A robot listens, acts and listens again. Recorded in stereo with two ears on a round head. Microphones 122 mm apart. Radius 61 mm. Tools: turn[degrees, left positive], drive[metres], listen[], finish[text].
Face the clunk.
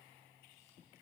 Action: listen[]
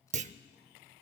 Thought: The clunk: about 55° right or 125° right.
Action: turn[-55]
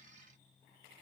Action: listen[]
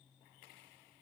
Action: finish[I heard a clunk, but can't make it out now. It was about straight ahead or 70° right.]